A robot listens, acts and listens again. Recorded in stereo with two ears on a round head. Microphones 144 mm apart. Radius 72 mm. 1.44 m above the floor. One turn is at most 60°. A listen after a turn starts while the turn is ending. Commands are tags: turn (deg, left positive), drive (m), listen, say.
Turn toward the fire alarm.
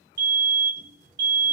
<turn deg="-55"/>
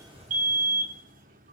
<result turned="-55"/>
<turn deg="-50"/>
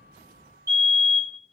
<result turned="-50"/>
<turn deg="-20"/>
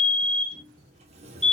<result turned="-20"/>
<say>Found it: a fire alarm, straight ahead, 1 to 2 m away.</say>